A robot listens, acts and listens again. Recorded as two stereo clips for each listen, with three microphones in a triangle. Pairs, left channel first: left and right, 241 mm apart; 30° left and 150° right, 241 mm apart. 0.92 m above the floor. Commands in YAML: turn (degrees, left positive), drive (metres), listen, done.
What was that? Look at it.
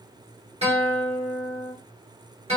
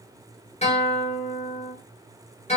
turn: -30
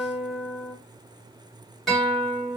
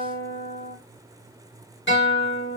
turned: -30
done: "Facing the guitar, 1 to 2 m away."